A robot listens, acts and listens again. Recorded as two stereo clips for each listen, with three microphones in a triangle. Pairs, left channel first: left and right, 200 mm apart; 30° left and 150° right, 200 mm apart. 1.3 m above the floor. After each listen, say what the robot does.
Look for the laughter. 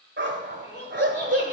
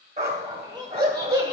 Turn 140° left.
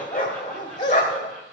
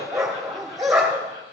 Keep listening.
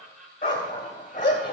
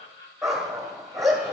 Facing the laughter.